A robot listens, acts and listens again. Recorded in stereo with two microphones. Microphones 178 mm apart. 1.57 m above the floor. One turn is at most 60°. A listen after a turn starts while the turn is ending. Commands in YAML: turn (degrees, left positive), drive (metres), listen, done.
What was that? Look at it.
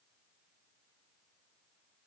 listen: true
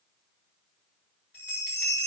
turn: 60
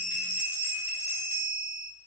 turn: 45
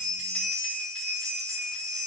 done: "Found it: a bell, straight ahead."